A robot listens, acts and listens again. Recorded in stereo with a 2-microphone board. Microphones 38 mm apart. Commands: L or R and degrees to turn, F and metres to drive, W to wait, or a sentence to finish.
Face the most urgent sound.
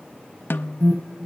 R60
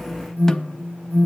R55
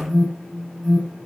R10
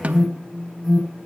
Found it: an alarm, straight ahead, over 4 m away.